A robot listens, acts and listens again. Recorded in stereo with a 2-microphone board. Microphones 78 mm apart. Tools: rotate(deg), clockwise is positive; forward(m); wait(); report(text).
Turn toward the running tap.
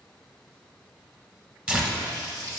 rotate(40)
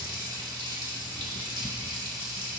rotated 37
rotate(95)
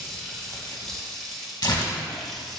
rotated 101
report("Facing the running tap.")